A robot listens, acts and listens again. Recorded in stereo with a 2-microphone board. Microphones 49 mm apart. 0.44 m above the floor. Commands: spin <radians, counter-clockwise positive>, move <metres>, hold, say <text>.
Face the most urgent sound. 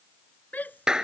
spin 0.70
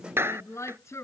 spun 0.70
spin 1.75
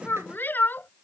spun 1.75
spin 0.70
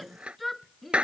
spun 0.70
say Found it: a shout, straight ahead.